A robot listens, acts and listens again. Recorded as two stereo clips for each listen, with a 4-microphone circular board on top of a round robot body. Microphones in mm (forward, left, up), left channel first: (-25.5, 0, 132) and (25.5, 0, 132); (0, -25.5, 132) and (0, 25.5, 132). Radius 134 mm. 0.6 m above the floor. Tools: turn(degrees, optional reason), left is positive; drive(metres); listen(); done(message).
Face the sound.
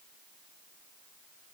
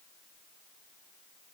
listen()
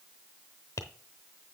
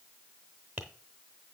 turn(degrees=155, reason="The tapping: 155° left.")
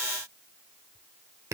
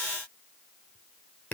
turn(degrees=-30, reason="The tapping is now 30° right.")
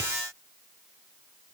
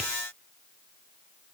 listen()
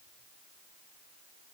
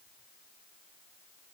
listen()
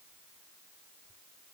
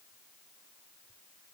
done("Facing where the tapping came from. I can't hear it now.")